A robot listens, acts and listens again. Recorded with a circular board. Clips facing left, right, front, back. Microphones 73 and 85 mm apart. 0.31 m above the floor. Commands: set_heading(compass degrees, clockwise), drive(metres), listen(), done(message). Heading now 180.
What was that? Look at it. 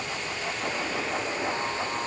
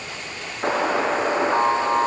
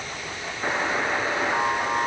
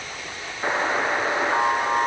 set_heading(285)
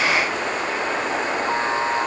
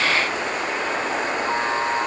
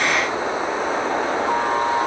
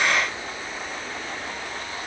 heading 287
done("Facing the buzzer.")